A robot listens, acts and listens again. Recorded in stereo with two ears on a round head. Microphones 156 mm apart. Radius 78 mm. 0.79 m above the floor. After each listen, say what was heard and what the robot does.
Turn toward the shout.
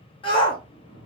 The shout: about 30° left or 150° left. Turn 30° left.
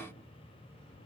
Keep listening.
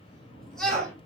Found it: a shout, straight ahead.